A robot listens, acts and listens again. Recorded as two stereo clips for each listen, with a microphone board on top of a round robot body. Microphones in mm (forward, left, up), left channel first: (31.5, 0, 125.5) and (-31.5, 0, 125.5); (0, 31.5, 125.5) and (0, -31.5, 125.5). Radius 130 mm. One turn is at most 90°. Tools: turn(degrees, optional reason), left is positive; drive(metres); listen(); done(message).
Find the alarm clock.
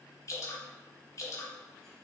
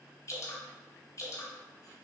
listen()
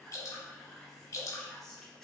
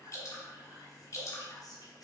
listen()
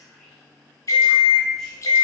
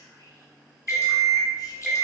done("Facing the alarm clock, 1 to 2 m away.")